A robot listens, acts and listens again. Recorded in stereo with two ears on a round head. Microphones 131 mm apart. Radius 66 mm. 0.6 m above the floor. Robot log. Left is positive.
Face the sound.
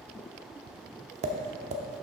note: The tapping: about 50° right or 130° right.
cmd yaw -50
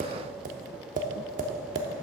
note: So it is at 70° right.
cmd yaw -70
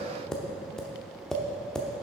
end: Facing the tapping.